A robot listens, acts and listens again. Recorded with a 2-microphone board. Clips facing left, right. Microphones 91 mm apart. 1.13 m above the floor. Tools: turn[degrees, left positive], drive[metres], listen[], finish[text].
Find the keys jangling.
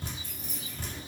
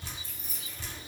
Thought: The keys jangling: about 60° left or 120° left.
Action: turn[60]
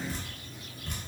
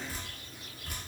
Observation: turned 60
Action: listen[]
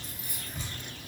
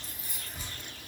Thought: So it is at 55° left.
Action: turn[55]
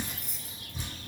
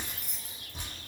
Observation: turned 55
Action: finish[Facing the keys jangling, under 1 m away.]